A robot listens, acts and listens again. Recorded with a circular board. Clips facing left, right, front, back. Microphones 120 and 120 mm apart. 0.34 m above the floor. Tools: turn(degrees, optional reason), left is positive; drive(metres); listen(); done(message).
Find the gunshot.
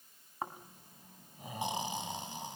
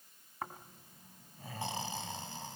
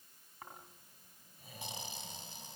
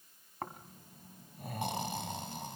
listen()
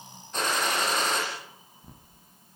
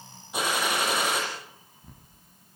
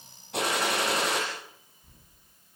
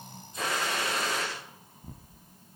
turn(degrees=-10, reason="The gunshot: 10° right.")
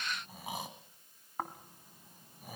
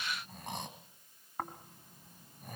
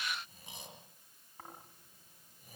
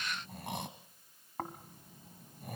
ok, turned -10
done("I heard a gunshot from this way, but can't make it out now.")